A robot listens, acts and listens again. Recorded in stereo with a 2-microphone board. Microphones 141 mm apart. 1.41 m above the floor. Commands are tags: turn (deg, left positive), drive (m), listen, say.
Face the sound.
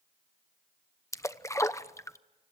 <turn deg="20"/>
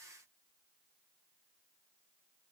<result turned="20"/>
<listen/>
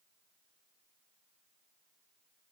<say>I heard a splash, but can't make it out now. It was about straight ahead or 140° left.</say>